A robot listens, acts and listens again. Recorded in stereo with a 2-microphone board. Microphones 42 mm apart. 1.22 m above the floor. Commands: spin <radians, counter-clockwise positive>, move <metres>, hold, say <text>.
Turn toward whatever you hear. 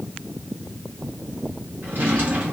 spin -0.96
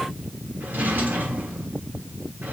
spin -1.13
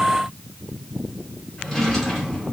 say Facing the drawer.